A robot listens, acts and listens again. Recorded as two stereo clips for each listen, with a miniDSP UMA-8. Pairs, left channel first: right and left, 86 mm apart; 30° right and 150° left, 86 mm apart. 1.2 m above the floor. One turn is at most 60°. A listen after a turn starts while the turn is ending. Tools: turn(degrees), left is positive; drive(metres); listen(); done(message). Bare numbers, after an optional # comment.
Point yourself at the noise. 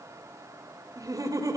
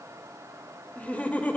# The laughter: 45° left.
turn(45)
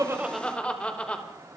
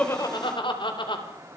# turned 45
# The laughter is now 15° right.
turn(-15)
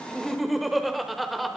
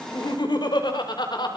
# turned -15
done("Facing the laughter, over 4 m away.")